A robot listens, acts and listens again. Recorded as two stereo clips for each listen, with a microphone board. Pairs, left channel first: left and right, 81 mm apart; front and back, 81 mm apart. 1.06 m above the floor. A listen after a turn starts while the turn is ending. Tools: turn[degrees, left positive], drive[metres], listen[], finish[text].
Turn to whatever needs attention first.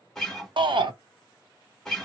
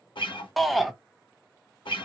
Thought: The shout: 90° right.
Action: turn[-90]
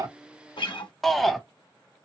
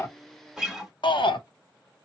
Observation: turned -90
Action: finish[Found it: a shout, straight ahead, under 1 m away.]